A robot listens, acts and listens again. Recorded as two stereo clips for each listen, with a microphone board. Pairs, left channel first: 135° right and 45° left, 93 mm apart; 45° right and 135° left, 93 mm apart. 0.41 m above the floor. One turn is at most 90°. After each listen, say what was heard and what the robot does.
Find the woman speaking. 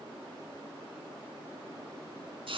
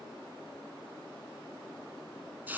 Keep listening.
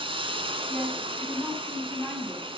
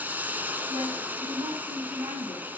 The woman speaking: 130° left. Turn 90° left.
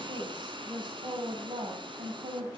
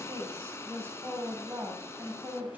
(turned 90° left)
The woman speaking is now 65° left. Turn 65° left.
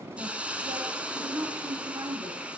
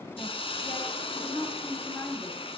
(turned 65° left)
The woman speaking is now 15° left. Turn 15° left.
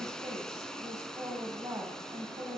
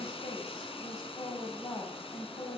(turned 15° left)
Facing the woman speaking, 2 to 4 m away.